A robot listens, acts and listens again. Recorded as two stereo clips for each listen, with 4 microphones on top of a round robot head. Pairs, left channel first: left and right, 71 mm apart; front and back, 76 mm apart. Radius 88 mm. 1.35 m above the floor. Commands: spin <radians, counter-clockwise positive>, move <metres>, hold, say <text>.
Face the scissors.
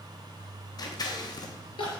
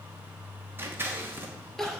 spin 2.01
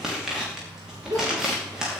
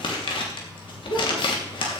say Found it: scissors, straight ahead, 2 to 4 m away.